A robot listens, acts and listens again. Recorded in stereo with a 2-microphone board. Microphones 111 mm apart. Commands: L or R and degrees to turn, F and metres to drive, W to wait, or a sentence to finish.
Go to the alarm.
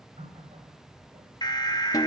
L40
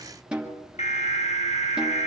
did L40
L100
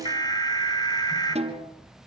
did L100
L35
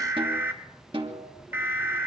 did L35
R20
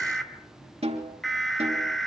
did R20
F1.0
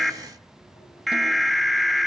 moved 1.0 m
F1.0
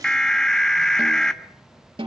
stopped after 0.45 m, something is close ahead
Arrived at the alarm, straight ahead.